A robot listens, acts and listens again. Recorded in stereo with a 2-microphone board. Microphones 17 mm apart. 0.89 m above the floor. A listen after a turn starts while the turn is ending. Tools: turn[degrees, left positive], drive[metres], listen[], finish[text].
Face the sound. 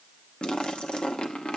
Thought: The splash: about 75° left or 105° left.
Action: turn[75]
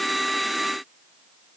Action: listen[]
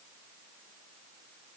Action: finish[I heard a splash, but can't make it out now. It was about straight ahead or 30° left.]